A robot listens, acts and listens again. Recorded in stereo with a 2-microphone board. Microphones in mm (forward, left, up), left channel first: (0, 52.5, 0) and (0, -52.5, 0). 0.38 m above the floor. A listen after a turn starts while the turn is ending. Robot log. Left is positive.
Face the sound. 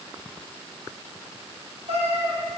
cmd yaw -90
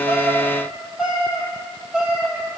note: So it is at 10° right.
cmd yaw -10
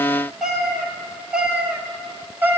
note: The cat meowing is now 20° right.
cmd yaw -20
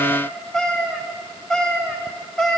end: Facing the cat meowing, 1 to 2 m away.